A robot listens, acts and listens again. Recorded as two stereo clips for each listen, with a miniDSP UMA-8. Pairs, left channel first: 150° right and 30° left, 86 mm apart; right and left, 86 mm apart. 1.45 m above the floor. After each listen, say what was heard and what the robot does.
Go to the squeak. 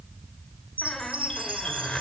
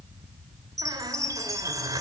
The squeak: 125° left. Turn 125° left.
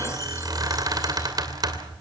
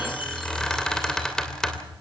The squeak is now 10° right. Turn 10° right.
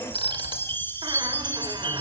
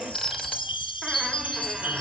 Keep listening.
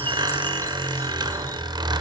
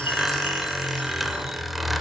Drive 1.0 m forward.
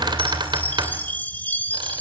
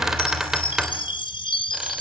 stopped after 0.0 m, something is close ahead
Something is in my way. I am facing the squeak but have not reached it.